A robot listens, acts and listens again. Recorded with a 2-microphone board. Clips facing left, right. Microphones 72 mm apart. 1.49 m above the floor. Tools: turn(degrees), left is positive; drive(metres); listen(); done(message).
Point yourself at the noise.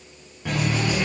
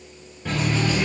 turn(degrees=30)
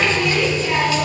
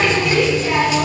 turn(degrees=-25)
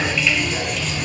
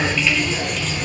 done("Found it: a running tap, straight ahead.")